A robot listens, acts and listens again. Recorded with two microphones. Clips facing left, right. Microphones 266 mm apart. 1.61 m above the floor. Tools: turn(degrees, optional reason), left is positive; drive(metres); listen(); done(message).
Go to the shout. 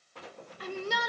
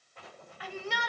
turn(degrees=45, reason="The shout: about 45° left or 135° left.")
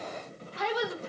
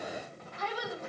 turn(degrees=90, reason="So it is at 90° left.")
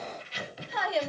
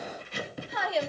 drive(metres=1.0)
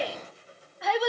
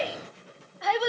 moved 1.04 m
drive(metres=1.0)
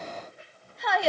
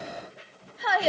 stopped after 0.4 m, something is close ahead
done("I am next to the shout.")